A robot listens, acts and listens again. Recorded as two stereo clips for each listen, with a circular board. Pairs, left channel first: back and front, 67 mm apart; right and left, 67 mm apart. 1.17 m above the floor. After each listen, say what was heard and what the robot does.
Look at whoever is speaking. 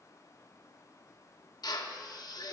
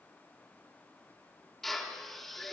Keep listening.
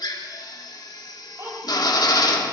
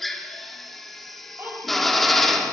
The child speaking: 40° left. Turn 40° left.
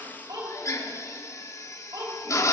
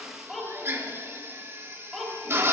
Found it: a child speaking, straight ahead.